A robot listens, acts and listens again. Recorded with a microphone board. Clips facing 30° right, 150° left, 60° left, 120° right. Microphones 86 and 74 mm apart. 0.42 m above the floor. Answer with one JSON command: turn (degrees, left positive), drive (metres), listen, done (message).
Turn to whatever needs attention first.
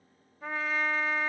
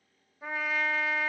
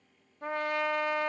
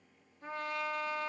{"listen": true}
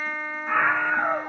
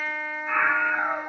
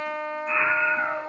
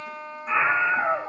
{"turn": -75}
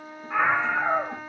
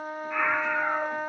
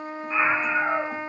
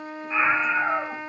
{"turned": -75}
{"turn": -20}
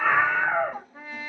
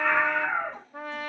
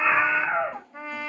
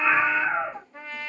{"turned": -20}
{"done": "Facing the scream, 1 to 2 m away."}